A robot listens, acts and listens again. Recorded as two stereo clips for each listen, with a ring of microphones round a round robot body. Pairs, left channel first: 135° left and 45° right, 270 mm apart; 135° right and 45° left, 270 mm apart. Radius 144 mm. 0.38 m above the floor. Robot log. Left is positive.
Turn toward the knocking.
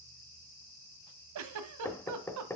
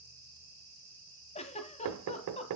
note: The knocking: 55° left.
cmd yaw +55
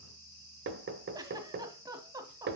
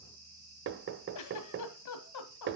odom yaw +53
end: Found it: knocking, straight ahead, 1 to 2 m away.